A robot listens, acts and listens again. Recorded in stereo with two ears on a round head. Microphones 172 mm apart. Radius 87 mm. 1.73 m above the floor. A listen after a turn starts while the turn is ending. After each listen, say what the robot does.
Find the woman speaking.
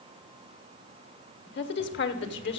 Turn 65° left.
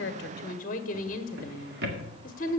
Turn 45° left.
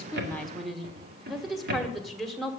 Facing the woman speaking.